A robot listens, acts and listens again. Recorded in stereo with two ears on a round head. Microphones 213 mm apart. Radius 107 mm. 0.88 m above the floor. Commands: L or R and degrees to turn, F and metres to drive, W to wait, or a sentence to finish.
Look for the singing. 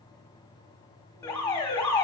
W
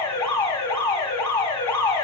W
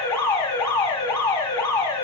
I can't make out singing to turn to.